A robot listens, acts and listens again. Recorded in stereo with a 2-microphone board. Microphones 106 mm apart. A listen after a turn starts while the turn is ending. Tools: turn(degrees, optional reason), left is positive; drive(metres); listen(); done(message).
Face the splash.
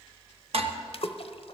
turn(degrees=60, reason="The splash: about 60° left or 120° left.")
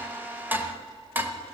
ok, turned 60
listen()
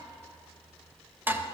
done("I heard a splash, but can't make it out now. It was about straight ahead or 60° left.")